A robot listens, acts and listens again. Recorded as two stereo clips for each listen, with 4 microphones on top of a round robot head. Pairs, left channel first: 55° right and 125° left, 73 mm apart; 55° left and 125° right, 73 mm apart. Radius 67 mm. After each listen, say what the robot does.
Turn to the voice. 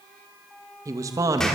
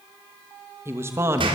Turn 175° left.
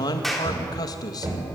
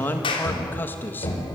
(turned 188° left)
Turn 15° right.
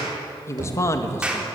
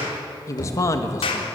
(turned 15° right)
Found it: a man speaking, straight ahead.